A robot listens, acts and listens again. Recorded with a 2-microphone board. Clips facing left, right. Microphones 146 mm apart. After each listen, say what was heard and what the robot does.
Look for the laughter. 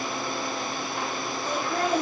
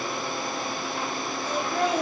The laughter: about 50° left or 130° left. Turn 50° left.
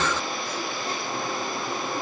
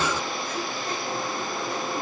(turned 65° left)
Keep listening.
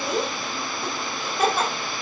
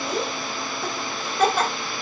Found it: laughter, straight ahead.